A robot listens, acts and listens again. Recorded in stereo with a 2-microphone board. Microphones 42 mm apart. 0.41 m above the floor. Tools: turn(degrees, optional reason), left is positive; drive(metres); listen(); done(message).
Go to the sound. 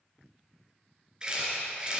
turn(degrees=-20, reason="The camera shutter: about 20° right or 160° right.")
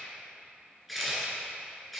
drive(metres=1.0)
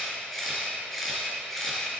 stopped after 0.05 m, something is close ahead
turn(degrees=10, reason="The camera shutter is now 10° left.")
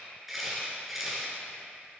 done("Something is in my way. I am facing the camera shutter but have not reached it.")